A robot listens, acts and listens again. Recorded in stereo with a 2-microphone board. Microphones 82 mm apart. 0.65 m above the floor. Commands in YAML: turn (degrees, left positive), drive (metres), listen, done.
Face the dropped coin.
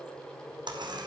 turn: -65
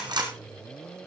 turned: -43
turn: -65
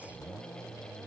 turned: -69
done: "Facing where the dropped coin came from. I can't hear it now."